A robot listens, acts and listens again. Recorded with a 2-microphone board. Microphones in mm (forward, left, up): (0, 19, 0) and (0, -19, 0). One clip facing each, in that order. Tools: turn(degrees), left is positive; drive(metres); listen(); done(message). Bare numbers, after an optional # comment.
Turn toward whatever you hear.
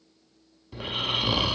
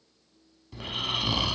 turn(30)
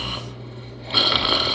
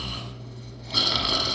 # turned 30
# So it is at 135° left.
turn(135)
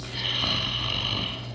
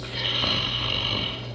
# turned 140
done("Facing the snoring.")